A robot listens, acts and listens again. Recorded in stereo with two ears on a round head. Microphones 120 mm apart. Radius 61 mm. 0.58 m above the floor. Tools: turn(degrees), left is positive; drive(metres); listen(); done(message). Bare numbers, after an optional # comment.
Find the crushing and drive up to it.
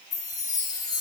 listen()
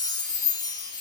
listen()
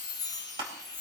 # The crushing: about 40° right or 140° right.
turn(-40)
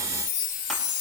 listen()
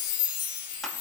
listen()
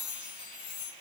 done("I heard crushing, but can't make it out now. It was about straight ahead or 100° right. I did not reach it.")